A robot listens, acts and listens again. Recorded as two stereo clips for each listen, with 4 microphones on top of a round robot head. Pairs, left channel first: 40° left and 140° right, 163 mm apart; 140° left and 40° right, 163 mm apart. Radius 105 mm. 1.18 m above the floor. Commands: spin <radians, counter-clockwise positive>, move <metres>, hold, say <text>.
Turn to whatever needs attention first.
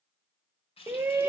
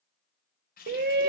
spin -1.05
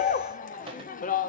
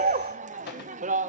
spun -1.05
say Found it: a shout, straight ahead, under 1 m away.